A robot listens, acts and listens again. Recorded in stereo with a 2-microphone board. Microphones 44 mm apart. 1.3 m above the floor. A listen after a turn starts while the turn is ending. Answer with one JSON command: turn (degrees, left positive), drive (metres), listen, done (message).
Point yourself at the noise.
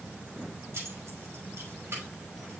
{"turn": -90}
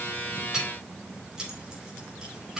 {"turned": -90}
{"turn": -15}
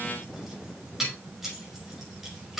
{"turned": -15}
{"turn": -10}
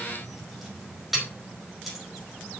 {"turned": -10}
{"done": "Facing the keys jangling."}